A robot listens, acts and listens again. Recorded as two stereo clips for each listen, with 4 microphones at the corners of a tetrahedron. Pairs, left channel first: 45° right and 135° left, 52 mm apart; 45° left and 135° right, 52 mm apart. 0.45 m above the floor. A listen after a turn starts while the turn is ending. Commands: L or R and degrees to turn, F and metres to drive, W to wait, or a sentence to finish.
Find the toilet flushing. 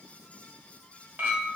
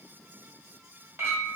W
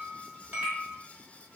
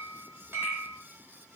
W
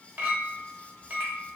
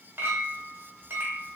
I can't make out a toilet flushing to turn to.